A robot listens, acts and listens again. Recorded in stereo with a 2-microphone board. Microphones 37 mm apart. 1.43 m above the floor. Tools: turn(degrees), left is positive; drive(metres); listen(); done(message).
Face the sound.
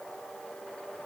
listen()
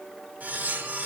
turn(degrees=-50)
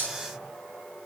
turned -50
turn(degrees=-80)
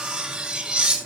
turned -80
turn(degrees=-20)
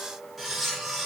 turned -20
done("Facing the cutlery clinking, 2 to 4 m away.")